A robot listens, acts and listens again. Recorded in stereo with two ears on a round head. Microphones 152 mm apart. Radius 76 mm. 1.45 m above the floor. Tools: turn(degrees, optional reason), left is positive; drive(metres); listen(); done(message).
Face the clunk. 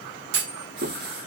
turn(degrees=-70, reason="The clunk: about 70° right or 110° right.")
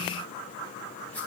listen()
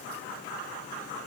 done("I heard a clunk, but can't make it out now. It was about straight ahead or 40° right.")